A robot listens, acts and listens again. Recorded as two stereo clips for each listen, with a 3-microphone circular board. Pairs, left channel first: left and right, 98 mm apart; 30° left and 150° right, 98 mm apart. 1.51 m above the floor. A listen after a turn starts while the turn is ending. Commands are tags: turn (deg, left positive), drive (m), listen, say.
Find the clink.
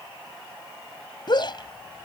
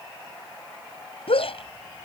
<listen/>
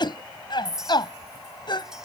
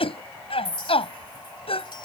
<say>Found it: a clink, straight ahead.</say>